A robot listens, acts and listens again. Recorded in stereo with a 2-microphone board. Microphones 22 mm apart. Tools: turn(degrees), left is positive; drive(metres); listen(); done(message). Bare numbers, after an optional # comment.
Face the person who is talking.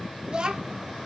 # The child speaking: about 40° right or 140° right.
turn(-40)
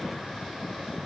listen()
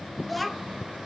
done("Facing the child speaking.")